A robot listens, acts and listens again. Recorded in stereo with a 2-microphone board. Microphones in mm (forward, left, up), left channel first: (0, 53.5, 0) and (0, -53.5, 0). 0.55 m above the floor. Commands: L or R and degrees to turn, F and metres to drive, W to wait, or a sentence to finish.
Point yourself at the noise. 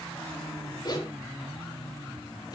L35
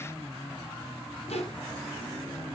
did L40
L105
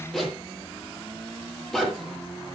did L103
Found it: a zipper, straight ahead, over 4 m away.